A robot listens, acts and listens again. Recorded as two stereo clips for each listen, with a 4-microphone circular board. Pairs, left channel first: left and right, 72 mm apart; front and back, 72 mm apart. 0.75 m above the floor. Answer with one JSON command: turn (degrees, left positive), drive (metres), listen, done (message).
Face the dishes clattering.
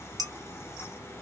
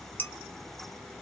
{"turn": -65}
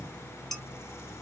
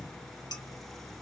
{"done": "Found it: dishes clattering, straight ahead."}